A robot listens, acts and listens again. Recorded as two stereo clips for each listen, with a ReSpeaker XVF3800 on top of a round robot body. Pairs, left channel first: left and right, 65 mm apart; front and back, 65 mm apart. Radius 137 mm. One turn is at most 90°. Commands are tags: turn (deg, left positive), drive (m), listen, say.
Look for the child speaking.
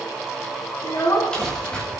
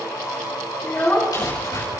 <turn deg="55"/>
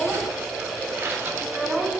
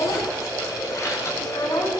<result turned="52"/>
<turn deg="-10"/>
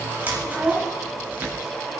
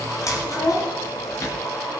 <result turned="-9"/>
<say>Found it: a child speaking, straight ahead.</say>